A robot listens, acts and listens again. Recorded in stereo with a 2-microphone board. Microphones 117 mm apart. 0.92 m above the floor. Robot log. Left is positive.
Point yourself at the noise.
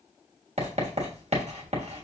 note: The writing: about 60° right or 120° right.
cmd yaw -60
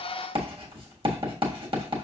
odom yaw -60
note: So it is at 50° right.
cmd yaw -50
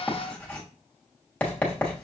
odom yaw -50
note: The writing is now 10° left.
cmd yaw +10
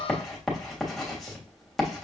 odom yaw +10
end: Found it: writing, straight ahead.